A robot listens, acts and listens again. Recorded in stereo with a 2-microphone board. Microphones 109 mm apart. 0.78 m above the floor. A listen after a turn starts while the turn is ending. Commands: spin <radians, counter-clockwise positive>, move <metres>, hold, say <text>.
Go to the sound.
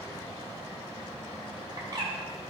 spin -0.70
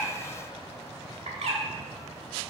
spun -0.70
spin -1.75
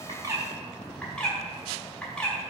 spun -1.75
spin 0.17
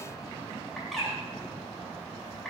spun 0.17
move 1.0
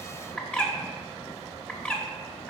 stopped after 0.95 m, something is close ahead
spin 0.17
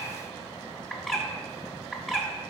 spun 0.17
say I am next to the bird.